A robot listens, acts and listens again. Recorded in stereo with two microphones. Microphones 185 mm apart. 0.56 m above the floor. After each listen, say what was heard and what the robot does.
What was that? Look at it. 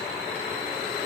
Keep listening.
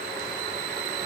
Keep listening.
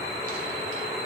I can't make out anything.